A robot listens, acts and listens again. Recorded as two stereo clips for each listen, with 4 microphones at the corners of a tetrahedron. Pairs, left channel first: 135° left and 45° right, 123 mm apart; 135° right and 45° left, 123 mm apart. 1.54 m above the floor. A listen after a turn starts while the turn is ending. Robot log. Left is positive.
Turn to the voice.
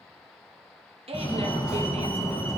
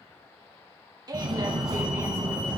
note: The woman speaking: 10° right.
cmd yaw -10
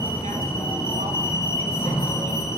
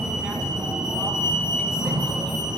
cmd idle
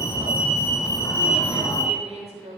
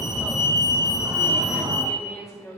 note: The woman speaking is now 70° right.
cmd yaw -70
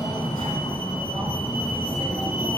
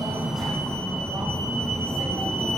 cmd idle
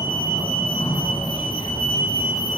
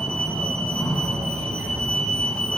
cmd idle
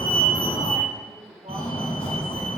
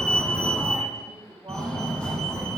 end: I heard a woman speaking from this way, but can't make it out now.